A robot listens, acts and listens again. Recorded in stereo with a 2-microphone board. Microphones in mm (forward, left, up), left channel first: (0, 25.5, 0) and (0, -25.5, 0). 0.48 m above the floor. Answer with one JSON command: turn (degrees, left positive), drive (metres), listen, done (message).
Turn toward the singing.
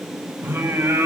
{"turn": -50}
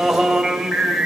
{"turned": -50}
{"done": "Facing the singing."}